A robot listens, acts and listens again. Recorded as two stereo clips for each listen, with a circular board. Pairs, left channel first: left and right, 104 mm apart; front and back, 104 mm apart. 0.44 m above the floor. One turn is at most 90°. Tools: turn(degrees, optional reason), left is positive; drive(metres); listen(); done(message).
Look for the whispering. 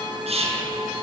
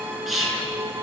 turn(degrees=-90, reason="The whispering: 90° right.")
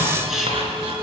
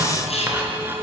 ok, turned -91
done("Facing the whispering.")